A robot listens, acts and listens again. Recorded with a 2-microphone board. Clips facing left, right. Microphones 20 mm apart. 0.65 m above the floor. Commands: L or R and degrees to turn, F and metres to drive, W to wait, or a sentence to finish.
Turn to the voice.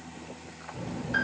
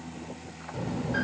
R90
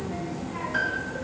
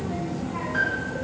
Facing the child speaking, under 1 m away.